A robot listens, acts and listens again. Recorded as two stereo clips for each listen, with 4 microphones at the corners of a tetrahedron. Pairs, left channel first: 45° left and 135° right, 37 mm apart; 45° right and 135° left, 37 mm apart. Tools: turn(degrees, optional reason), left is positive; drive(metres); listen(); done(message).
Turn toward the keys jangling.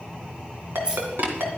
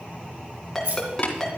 turn(degrees=155, reason="The keys jangling: 155° left.")
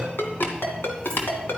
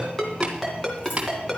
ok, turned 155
listen()
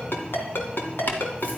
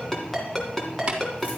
listen()
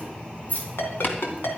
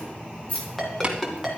done("Facing the keys jangling, over 4 m away.")